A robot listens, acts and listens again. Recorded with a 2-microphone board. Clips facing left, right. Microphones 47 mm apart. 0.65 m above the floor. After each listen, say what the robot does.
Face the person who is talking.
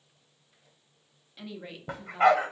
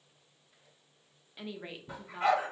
Turn 30° right.
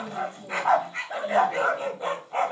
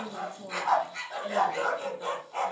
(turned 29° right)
Turn 135° right.
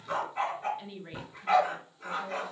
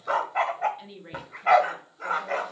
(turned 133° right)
Facing the woman speaking.